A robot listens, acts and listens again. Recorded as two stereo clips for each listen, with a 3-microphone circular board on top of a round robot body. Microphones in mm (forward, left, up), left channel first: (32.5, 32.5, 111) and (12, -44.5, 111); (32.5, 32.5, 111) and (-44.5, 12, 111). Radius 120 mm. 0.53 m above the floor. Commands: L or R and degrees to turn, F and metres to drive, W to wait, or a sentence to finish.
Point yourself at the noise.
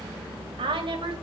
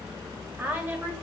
R100
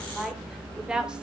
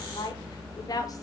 R25
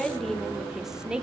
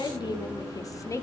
R30
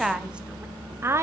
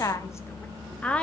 R60
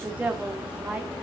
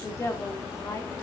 R35
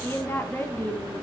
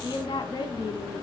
L15
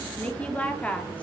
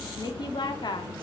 Facing the woman speaking.